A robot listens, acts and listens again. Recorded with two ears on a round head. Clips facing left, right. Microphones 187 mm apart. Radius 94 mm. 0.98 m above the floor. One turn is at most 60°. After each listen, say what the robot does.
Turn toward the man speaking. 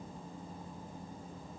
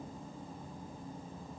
Keep listening.
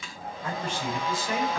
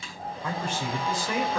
Turn 60° right.
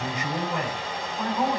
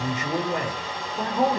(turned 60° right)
Turn 25° right.
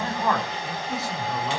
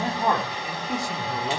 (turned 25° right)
Turn 15° right.
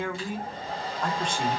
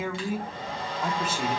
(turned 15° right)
Found it: a man speaking, straight ahead, 2 to 4 m away.